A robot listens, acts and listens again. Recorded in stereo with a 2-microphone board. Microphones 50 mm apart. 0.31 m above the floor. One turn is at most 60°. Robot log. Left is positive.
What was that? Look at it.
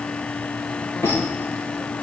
note: The squeak: about 70° left or 110° left.
cmd yaw +60
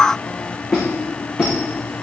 note: So it is at 10° left.
cmd yaw +10
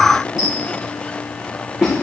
end: Facing the squeak, over 4 m away.